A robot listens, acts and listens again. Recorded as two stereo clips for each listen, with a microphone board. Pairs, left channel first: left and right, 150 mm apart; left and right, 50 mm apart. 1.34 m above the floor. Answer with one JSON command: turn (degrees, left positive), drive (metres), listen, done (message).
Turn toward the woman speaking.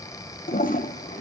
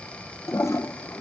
{"listen": true}
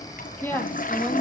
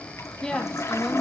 {"turn": 30}
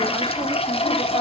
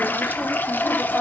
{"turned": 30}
{"listen": true}
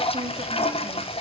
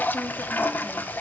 {"listen": true}
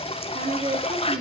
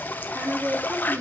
{"turn": -50}
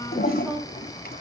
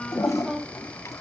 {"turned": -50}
{"done": "Facing the woman speaking, 2 to 4 m away."}